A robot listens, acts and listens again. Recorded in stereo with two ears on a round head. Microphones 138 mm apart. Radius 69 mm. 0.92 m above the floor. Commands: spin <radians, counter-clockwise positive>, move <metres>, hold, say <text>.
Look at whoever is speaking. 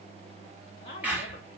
spin 0.70
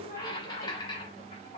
spin 1.48
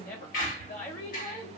spin 0.96
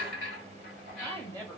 spin 0.17
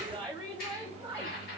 say Found it: a woman speaking, straight ahead, 1 to 2 m away.